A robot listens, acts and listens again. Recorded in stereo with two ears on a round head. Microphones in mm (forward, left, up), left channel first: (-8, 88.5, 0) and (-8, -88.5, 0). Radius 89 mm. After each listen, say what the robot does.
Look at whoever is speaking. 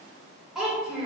Turn 30° right.
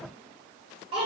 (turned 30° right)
Turn 145° right.
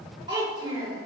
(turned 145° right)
Turn 25° right.
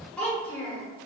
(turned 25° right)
Found it: a child speaking, straight ahead, 1 to 2 m away.